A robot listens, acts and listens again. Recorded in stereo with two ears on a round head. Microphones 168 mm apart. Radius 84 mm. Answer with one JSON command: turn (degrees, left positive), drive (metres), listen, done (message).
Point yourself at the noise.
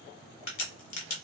{"turn": 45}
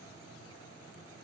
{"listen": true}
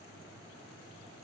{"done": "I heard a crack, but can't make it out now. It was about straight ahead or 90° left."}